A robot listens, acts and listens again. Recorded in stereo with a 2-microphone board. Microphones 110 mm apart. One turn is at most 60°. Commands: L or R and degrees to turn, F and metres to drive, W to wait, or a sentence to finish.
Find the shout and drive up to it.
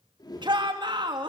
R45
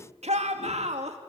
R60
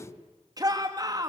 R35
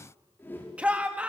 R15
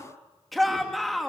F1.0
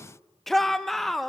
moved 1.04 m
F1.0
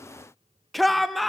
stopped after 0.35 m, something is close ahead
Arrived at the shout, straight ahead.